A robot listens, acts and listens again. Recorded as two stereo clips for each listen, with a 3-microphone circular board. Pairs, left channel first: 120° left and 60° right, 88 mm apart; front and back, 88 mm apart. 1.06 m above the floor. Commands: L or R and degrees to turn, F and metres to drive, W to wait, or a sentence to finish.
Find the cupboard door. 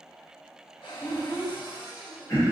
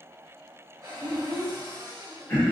L135
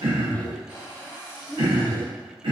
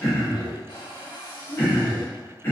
Found it: a cupboard door, straight ahead.